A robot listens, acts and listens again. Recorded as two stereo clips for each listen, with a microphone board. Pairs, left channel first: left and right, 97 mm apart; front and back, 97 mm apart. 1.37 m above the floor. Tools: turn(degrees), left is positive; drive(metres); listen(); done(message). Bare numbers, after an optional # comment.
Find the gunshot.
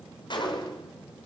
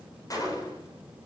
# The gunshot: 50° left.
turn(50)
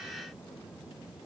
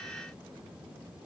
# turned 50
done("Facing where the gunshot came from. I can't hear it now.")